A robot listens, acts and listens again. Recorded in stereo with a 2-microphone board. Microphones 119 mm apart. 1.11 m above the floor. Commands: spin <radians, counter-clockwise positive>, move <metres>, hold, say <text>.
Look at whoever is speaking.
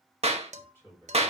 spin 0.35
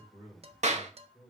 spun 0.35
spin 2.44
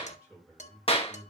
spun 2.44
spin -0.26
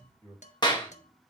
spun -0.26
say Facing the man speaking, over 4 m away.